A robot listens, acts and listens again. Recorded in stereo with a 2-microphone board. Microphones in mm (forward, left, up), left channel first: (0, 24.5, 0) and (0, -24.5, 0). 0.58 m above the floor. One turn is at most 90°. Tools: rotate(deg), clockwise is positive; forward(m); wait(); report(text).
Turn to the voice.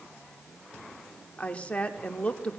rotate(-25)
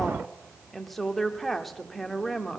report("Facing the woman speaking.")